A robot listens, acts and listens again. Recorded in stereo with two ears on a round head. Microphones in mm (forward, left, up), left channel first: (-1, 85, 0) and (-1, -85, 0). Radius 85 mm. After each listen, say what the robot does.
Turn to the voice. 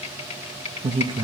Turn 25° right.
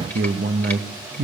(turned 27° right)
Turn 125° right.
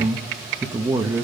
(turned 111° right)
Turn 10° right.
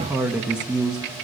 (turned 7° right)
Facing the man speaking.